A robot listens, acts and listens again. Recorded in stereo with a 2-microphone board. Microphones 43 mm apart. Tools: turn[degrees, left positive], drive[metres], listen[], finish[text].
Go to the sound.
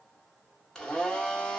Action: turn[30]
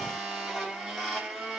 Thought: So it is at 15° right.
Action: turn[-15]
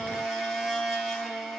Action: drive[1.0]
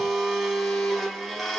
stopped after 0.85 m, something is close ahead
Action: finish[I am next to the blender.]